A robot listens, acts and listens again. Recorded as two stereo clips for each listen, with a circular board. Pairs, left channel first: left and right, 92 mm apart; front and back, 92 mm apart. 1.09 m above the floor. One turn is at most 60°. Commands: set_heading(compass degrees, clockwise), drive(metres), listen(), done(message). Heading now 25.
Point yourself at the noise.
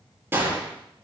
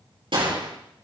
set_heading(85)
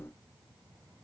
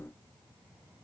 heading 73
set_heading(133)
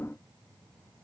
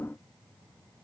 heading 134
set_heading(179)
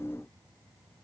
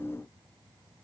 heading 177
done("Facing where the gunshot came from. I can't hear it now.")